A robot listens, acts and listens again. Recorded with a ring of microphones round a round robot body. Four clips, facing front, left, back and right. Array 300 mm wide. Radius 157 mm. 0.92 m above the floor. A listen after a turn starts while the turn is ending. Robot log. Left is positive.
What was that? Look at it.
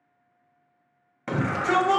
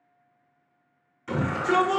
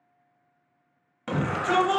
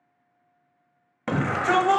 note: The shout: 80° right.
cmd yaw -80
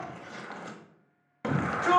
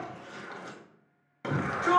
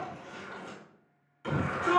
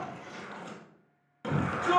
note: The shout is now 10° left.
cmd yaw +10
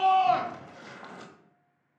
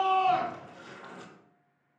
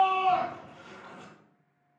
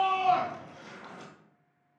end: Found it: a shout, straight ahead, 1 to 2 m away.